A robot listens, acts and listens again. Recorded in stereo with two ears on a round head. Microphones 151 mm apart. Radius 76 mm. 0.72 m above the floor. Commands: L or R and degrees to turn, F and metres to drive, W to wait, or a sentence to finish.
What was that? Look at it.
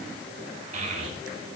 R40
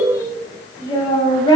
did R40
L30
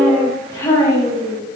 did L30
L20
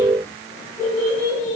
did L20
L15
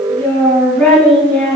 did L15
Found it: a child speaking, straight ahead, over 4 m away.